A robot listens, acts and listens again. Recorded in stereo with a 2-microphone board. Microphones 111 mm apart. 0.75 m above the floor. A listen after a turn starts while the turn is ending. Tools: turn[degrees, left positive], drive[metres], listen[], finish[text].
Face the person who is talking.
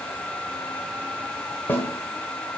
Action: listen[]
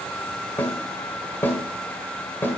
Action: listen[]
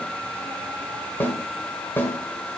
Action: finish[I can't make out anyone speaking to turn to.]